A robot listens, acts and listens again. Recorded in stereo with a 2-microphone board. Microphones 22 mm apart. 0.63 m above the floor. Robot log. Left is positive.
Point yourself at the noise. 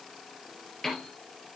note: The piano: about 15° left or 165° left.
cmd yaw +15
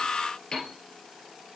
note: So it is at 145° left.
cmd yaw +145
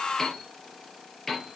note: The piano is now 15° left.
cmd yaw +15
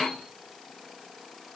end: Found it: a piano, straight ahead.